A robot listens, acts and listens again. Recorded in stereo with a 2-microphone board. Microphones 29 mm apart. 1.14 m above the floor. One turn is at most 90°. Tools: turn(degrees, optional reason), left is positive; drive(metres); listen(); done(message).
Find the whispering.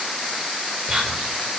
turn(degrees=-25, reason="The whispering: about 25° right or 155° right.")
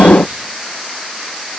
turn(degrees=-90, reason="So it is at 130° right.")
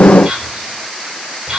turn(degrees=-30, reason="The whispering is now 30° right.")
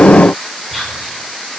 done("Facing the whispering.")